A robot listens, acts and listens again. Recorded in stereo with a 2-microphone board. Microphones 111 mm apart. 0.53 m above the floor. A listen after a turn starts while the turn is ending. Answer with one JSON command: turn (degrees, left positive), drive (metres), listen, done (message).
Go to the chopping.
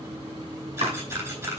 {"turn": -70}
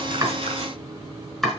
{"drive": 1.0}
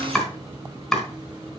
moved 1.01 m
{"drive": 1.0}
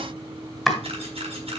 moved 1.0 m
{"drive": 1.0}
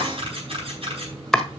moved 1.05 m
{"drive": 1.0}
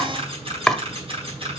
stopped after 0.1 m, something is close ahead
{"done": "Arrived at the chopping, straight ahead."}